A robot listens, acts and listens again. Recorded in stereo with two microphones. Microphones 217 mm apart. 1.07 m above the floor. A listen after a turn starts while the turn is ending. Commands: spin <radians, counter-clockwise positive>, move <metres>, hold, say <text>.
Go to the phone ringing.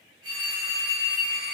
spin -0.26
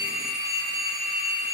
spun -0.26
move 1.0
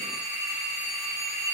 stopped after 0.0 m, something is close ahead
say Something is in my way. I am facing the phone ringing but have not reached it.